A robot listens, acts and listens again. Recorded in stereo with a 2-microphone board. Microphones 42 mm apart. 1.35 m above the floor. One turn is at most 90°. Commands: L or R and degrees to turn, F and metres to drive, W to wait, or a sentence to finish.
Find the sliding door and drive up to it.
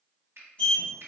L30
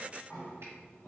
L90
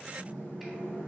L55
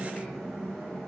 F1.0
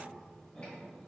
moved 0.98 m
W
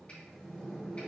L10
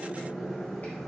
F1.0
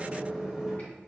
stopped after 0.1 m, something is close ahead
R10
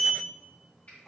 I am next to the sliding door.